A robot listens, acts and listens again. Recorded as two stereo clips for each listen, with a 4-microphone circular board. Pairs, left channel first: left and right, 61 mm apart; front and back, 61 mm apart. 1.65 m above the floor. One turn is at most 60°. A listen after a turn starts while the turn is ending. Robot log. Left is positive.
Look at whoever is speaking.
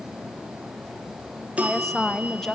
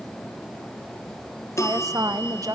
note: The woman speaking: 170° left.
cmd yaw +60
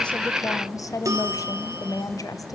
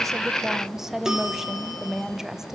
note: The woman speaking is now 100° left.
cmd yaw +60
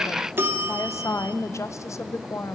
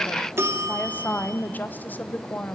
note: The woman speaking is now 60° left.
cmd yaw +60
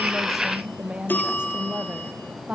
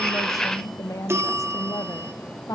note: The woman speaking is now 20° right.
cmd yaw -20
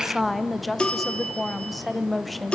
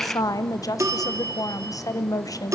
end: Found it: a woman speaking, straight ahead.